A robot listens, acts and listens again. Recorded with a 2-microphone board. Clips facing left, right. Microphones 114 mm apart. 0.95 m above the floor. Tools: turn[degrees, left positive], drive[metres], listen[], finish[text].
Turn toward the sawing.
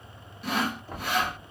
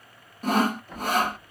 Thought: The sawing: about 45° right or 135° right.
Action: turn[-45]
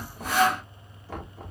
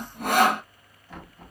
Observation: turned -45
Thought: So it is at 85° right.
Action: turn[-85]
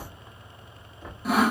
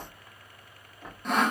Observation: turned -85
Action: finish[Found it: sawing, straight ahead.]